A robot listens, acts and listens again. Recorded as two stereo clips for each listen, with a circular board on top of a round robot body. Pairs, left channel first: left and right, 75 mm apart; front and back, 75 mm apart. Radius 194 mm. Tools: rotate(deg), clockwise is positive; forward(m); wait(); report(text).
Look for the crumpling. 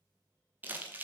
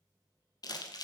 rotate(25)
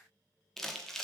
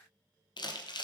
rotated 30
report("Found it: crumpling, straight ahead, 1 to 2 m away.")